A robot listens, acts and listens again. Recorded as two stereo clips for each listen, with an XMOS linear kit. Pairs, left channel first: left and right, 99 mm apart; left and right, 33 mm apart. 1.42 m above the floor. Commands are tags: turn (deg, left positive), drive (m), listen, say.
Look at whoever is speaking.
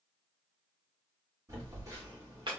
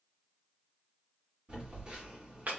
<listen/>
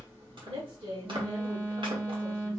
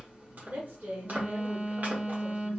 <turn deg="-75"/>
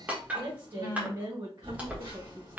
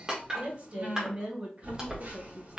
<turn deg="-45"/>
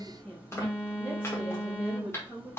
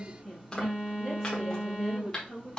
<say>Facing the woman speaking.</say>